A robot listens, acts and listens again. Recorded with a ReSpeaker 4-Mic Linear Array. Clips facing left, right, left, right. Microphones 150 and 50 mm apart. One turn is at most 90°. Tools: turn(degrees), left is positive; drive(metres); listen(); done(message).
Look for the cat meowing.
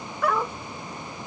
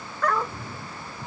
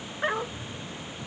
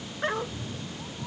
turn(degrees=-55)
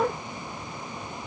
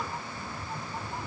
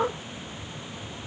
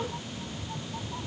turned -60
turn(degrees=-55)
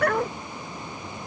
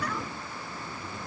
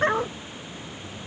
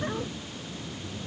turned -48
turn(degrees=-10)
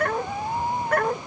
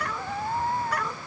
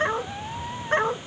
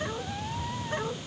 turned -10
turn(degrees=10)
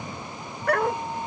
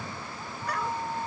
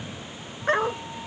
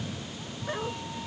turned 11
done("Facing the cat meowing.")